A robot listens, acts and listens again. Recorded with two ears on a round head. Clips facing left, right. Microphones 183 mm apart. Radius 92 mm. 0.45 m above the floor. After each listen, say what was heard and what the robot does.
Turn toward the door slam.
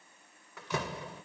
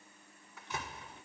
The door slam: about 55° left or 125° left. Turn 55° left.
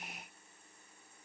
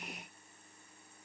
Keep listening.
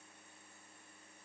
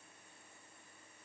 I heard a door slam, but can't make it out now. It was about straight ahead or 70° left.